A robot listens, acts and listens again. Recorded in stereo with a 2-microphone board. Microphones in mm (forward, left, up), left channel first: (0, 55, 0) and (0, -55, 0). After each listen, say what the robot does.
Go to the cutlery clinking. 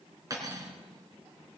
Turn 30° right.
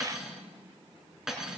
Drive 1.0 m forward.
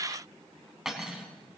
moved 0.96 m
Drive 1.0 m forward.
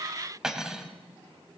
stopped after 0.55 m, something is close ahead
Arrived at the cutlery clinking, straight ahead.